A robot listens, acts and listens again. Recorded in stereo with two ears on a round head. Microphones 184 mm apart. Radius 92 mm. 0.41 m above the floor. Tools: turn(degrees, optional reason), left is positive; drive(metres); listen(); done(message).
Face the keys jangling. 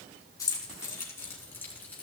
turn(degrees=30)
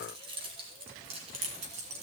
turn(degrees=-35, reason="So it is at 35° right.")
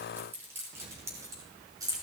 turn(degrees=-20, reason="The keys jangling is now 20° right.")
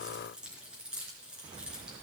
done("Found it: keys jangling, straight ahead.")